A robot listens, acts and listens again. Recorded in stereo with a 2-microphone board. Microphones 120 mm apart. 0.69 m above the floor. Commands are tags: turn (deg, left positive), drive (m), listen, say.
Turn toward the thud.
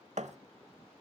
<turn deg="-70"/>
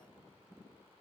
<listen/>
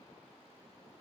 <say>I heard a thud, but can't make it out now. It was about straight ahead or 40° right.</say>